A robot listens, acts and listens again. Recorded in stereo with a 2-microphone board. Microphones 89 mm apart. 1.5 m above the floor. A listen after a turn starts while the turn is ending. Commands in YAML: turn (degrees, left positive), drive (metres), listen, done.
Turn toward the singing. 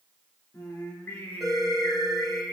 turn: 30
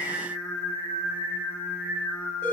turn: 20
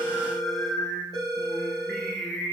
turn: 20
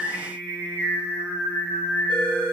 turn: 145
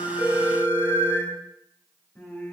turn: 15
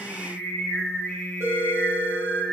done: "Found it: singing, straight ahead."